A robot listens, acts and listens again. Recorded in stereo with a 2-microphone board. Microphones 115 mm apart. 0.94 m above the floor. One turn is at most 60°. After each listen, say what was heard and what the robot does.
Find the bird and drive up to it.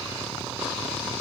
Keep listening.
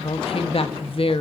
Keep listening.
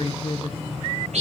Turn 60° right.
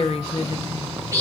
So it is at 25° right. Turn 25° right.
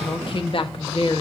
Keep listening.
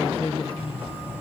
The bird is now 15° right. Turn 15° right.
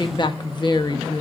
Keep listening.
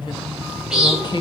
Drive 1.0 m forward.
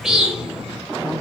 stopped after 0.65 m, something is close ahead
Blocked. The bird is further on, straight ahead.